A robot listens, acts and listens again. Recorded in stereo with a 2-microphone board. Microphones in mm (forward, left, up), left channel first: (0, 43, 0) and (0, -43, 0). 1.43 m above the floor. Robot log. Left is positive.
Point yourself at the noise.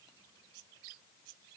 cmd idle
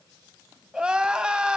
cmd yaw -30
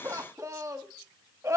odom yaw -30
note: So it is at 140° right.
cmd yaw -140
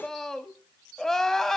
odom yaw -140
end: Facing the crying.